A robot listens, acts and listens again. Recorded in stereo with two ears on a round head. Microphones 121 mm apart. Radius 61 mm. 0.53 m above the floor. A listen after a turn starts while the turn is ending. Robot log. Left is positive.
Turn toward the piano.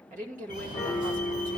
note: The piano: about 20° left or 160° left.
cmd yaw +20
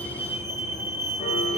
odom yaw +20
cmd idle
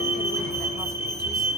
cmd idle
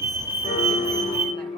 note: So it is at 140° left.
cmd yaw +140
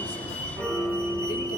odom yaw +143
end: Facing the piano, 2 to 4 m away.